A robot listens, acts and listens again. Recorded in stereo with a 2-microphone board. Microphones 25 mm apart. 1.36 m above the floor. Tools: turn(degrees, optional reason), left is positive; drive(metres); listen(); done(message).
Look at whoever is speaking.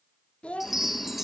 turn(degrees=55, reason="The child speaking: about 55° left or 125° left.")
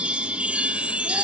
listen()
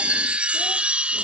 listen()
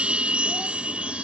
done("I heard a child speaking, but can't make it out now. It was about straight ahead or 70° left.")